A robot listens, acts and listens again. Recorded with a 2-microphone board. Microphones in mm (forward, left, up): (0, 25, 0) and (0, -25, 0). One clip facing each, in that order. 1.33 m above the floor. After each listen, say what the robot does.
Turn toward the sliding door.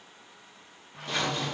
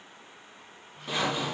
Turn 70° left.
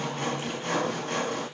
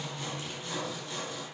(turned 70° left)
Turn 40° left.
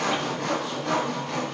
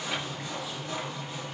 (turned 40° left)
Keep listening.
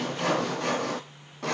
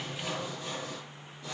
Facing the sliding door.